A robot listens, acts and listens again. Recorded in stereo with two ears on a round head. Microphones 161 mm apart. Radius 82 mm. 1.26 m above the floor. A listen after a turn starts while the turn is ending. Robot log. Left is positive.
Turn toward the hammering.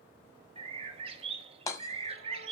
note: The hammering: about 15° left or 165° left.
cmd yaw +15
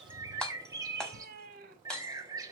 end: Facing the hammering.